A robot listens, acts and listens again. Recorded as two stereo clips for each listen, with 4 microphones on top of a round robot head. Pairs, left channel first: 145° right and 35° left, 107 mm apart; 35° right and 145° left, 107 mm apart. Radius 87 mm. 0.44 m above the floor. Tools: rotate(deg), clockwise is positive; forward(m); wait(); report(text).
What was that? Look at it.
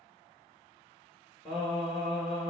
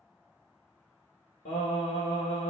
rotate(50)
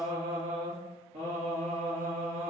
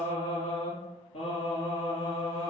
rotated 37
rotate(-10)
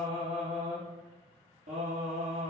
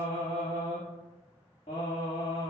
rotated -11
rotate(-10)
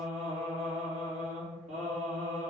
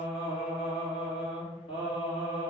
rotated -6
report("Facing the singing.")